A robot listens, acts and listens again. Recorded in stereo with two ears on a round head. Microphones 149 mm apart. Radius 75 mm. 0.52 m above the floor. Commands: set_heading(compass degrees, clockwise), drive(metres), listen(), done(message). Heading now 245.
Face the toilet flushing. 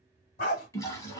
set_heading(225)
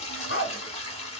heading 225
set_heading(85)
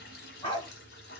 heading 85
set_heading(20)
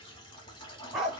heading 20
set_heading(350)
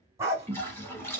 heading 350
set_heading(335)
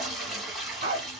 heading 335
done("Facing the toilet flushing.")